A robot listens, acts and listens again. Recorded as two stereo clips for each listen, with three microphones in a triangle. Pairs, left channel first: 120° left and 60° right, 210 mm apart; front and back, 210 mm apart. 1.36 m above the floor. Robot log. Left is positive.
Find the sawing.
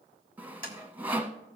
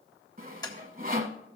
note: The sawing: 140° right.
cmd yaw -140
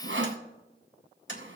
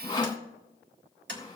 note: The sawing is now 65° right.
cmd yaw -65
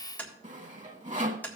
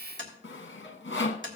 note: The sawing is now 10° right.
cmd yaw -10
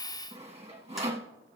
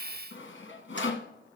end: Facing the sawing.